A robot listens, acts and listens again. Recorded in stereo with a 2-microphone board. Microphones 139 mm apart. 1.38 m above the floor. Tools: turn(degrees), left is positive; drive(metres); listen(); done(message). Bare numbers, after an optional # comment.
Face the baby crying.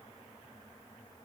listen()
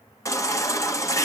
# The baby crying: about 25° left or 155° left.
turn(25)
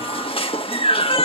# So it is at 130° left.
turn(130)
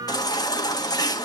# The baby crying is now 35° left.
turn(35)
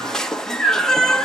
done("Found it: a baby crying, straight ahead, 1 to 2 m away.")